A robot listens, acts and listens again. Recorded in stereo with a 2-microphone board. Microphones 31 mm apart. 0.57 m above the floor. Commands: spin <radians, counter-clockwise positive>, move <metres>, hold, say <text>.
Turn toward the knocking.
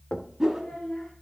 spin 0.79
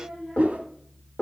spin 1.31
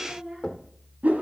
spin 0.70
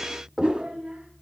say Found it: knocking, straight ahead, 1 to 2 m away.